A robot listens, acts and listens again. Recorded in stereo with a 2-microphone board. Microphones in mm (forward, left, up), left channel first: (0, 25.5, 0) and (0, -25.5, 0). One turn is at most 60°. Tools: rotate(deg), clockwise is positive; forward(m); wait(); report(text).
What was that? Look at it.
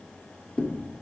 rotate(-25)
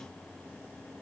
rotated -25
wait()
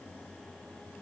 report("I heard a thud, but can't make it out now. It was about straight ahead or 130° left.")